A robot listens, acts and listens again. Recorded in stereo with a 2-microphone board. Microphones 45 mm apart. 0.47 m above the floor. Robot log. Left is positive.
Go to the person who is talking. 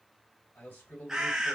note: The man speaking: about 55° left or 125° left.
cmd yaw +55
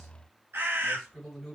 note: So it is at 15° left.
cmd yaw +15
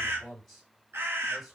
cmd fwd 1.0
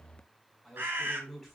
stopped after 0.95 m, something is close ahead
end: I am next to the man speaking.